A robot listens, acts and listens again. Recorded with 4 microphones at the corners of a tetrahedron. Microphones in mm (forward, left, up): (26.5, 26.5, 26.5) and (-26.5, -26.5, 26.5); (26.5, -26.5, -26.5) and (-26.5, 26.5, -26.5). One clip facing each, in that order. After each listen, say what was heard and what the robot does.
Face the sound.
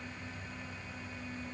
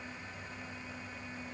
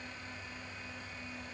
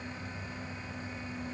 Keep listening.
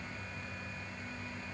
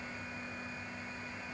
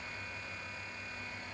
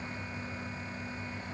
Keep listening.
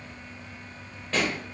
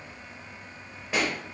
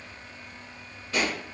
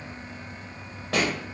The pop: 145° left. Turn 145° left.
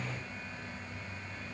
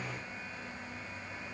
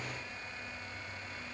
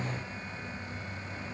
I heard a pop from this way, but can't make it out now.